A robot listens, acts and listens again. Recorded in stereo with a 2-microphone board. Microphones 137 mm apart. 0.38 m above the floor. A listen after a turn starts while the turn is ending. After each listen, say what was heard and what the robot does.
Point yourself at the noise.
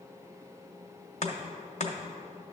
The chopping: about 55° left or 125° left. Turn 55° left.
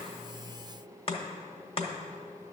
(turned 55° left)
So it is at 50° left. Turn 50° left.
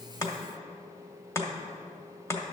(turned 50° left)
The chopping is now 20° left. Turn 20° left.
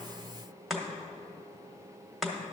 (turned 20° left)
Found it: chopping, straight ahead, 1 to 2 m away.